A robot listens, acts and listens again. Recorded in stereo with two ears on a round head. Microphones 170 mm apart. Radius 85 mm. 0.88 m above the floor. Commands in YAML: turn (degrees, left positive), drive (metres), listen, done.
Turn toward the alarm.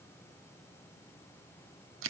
listen: true
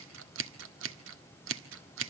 listen: true
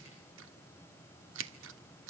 done: "I can't make out an alarm, only scissors."